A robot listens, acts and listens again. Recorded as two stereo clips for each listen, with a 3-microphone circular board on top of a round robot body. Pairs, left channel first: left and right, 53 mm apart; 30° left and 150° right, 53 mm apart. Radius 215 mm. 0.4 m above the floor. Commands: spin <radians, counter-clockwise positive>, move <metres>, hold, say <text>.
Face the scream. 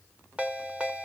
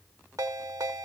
hold
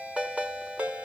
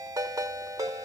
hold
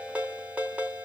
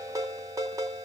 say I can't make out a scream, only a ringtone.